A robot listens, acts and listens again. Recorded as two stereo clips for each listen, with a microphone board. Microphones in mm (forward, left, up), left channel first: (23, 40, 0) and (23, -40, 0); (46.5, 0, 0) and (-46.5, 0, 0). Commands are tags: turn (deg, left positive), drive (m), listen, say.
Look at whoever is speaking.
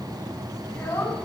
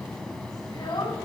<turn deg="20"/>
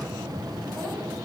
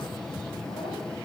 <listen/>
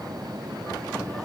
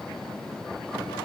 <listen/>
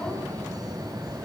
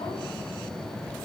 <say>I heard a child speaking from this way, but can't make it out now.</say>